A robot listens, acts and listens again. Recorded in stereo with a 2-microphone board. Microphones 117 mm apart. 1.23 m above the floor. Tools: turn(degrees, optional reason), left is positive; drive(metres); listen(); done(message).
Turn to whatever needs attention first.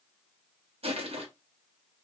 listen()
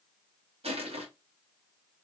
listen()
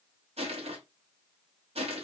done("I can't make out anything urgent to turn to.")